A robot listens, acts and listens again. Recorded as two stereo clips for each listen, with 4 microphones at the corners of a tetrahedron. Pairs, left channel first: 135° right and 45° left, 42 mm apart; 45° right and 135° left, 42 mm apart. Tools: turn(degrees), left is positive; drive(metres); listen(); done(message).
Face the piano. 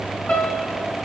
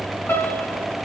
turn(degrees=-70)
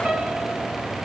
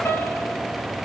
listen()
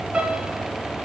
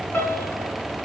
turn(degrees=-20)
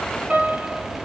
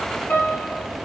done("Facing the piano.")